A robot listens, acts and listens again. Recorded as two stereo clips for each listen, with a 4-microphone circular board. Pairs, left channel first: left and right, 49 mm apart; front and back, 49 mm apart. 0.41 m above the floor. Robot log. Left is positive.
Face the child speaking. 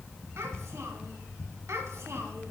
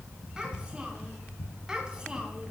note: The child speaking: 105° right.
cmd yaw -105
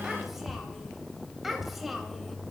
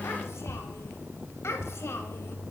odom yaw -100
end: Found it: a child speaking, straight ahead, 1 to 2 m away.